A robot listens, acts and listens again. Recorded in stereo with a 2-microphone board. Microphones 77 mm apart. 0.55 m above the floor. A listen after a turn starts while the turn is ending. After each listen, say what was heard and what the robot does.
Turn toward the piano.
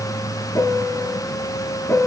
The piano: about 35° left or 145° left. Turn 35° left.
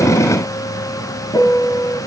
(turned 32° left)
So it is at 115° left. Turn 115° left.
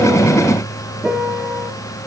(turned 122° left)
The piano is now 10° right. Turn 10° right.
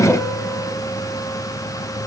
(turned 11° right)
Keep listening.
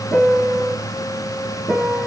Facing the piano.